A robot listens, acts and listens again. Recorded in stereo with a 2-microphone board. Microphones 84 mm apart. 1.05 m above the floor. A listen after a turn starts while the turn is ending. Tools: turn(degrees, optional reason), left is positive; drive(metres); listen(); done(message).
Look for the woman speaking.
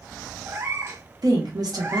turn(degrees=-55, reason="The woman speaking: about 55° right or 125° right.")
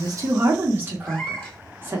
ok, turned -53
turn(degrees=-35, reason="So it is at 35° right.")
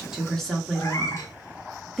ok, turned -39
done("Facing the woman speaking, under 1 m away.")